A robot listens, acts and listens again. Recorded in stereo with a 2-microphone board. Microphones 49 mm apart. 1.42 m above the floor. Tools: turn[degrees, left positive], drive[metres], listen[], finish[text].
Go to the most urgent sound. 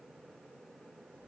Action: listen[]
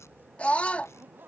Thought: The scream: about 25° left or 155° left.
Action: turn[25]
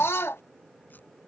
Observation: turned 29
Thought: So it is at 125° left.
Action: turn[125]
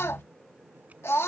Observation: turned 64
Thought: The scream is now 60° left.
Action: turn[60]
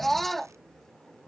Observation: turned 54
Action: drive[1.0]
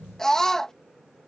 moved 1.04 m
Thought: The scream is now 10° left.
Action: turn[10]
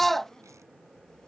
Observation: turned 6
Action: drive[1.0]
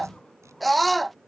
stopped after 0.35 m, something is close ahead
Action: finish[Arrived at the scream, straight ahead.]